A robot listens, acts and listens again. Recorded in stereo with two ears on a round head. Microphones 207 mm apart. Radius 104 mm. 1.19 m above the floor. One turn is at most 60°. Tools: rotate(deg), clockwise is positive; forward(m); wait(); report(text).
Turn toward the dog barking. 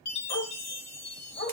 rotate(-55)
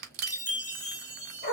rotate(-35)
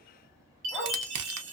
report("Facing the dog barking, 1 to 2 m away.")